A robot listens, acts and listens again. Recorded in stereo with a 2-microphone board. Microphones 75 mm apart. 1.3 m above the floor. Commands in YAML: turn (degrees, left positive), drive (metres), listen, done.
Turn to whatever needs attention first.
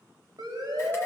turn: -55
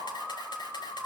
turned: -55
done: "Found it: a siren, straight ahead, over 4 m away."